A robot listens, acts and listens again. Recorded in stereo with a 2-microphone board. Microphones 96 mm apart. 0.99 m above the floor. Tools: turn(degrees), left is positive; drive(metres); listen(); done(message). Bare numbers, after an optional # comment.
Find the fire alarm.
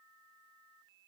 listen()
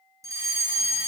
# The fire alarm: about 35° right or 145° right.
turn(-35)
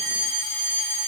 done("Found it: a fire alarm, straight ahead, 2 to 4 m away.")